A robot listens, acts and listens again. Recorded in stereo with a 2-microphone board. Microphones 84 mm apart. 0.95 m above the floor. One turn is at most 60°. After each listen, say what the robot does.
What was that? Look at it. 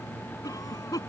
Turn 45° left.
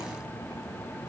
Keep listening.
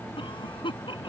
Turn 60° left.
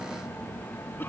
Turn 25° left.
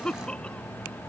Turn 15° left.
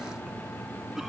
Keep listening.
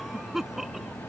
Found it: a cough, straight ahead.